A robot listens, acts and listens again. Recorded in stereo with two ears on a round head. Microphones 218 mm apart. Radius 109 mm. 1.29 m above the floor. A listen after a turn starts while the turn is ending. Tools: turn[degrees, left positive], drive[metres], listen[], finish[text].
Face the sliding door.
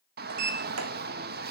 Thought: The sliding door: about 70° right or 110° right.
Action: turn[-70]
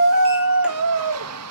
Action: listen[]
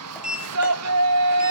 Action: finish[Facing the sliding door, 2 to 4 m away.]